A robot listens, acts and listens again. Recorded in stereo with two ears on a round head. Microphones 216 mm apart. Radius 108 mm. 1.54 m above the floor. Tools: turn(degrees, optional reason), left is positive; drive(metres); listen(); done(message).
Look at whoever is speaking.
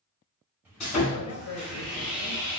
turn(degrees=60, reason="The man speaking: about 60° left or 120° left.")
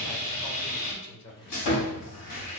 turn(degrees=60, reason="So it is at 60° left.")
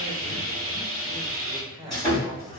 turn(degrees=-15, reason="The man speaking is now 15° right.")
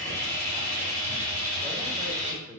done("Found it: a man speaking, straight ahead.")